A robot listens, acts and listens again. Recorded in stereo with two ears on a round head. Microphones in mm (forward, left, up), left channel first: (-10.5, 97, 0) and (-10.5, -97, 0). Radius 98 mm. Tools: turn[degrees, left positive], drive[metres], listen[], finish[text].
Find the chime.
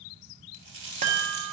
Thought: The chime: about 35° right or 145° right.
Action: turn[-35]
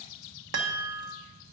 Thought: So it is at 105° right.
Action: turn[-105]
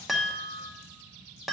Action: finish[Found it: a chime, straight ahead.]